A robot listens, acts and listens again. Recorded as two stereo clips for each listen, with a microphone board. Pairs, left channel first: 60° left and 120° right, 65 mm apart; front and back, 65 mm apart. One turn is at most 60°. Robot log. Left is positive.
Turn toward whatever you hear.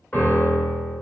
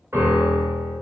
note: The piano: 130° left.
cmd yaw +60
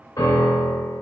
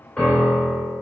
note: The piano is now 75° left.
cmd yaw +60
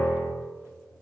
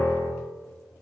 end: Facing the piano.